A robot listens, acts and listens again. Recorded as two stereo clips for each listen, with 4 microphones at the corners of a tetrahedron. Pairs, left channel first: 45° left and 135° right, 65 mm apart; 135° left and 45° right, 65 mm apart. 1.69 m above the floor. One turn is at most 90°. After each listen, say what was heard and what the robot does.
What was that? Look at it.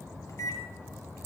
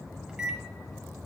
The microwave: 30° left. Turn 30° left.
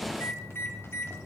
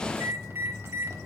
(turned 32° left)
Facing the microwave.